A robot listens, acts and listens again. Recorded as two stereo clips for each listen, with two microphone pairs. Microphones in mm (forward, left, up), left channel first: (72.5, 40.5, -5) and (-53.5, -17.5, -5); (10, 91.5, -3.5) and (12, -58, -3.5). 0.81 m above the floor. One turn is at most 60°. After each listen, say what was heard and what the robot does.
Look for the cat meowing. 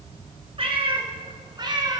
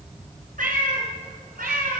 The cat meowing: 95° right. Turn 60° right.
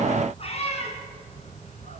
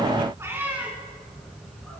The cat meowing is now 10° right. Turn 10° right.
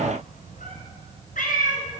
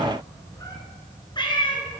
The cat meowing is now 35° left. Turn 35° left.
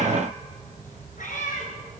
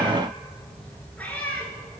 The cat meowing is now 10° left. Turn 10° left.
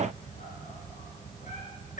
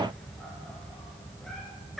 Facing the cat meowing.